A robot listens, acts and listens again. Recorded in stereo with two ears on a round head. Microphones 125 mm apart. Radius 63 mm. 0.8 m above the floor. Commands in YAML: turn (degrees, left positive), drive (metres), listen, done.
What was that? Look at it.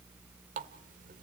turn: -65
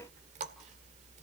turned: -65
turn: -50
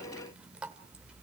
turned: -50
turn: -10
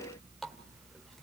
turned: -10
done: "Facing the running tap."